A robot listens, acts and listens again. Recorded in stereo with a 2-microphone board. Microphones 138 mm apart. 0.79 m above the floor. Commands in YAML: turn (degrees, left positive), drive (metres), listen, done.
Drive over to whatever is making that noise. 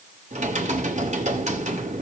turn: -55
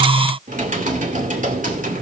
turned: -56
turn: -65
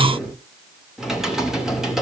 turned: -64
drive: 1.0
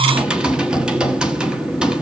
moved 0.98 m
drive: 1.0
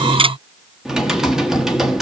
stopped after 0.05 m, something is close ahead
done: "Arrived at the typing on a keyboard, straight ahead."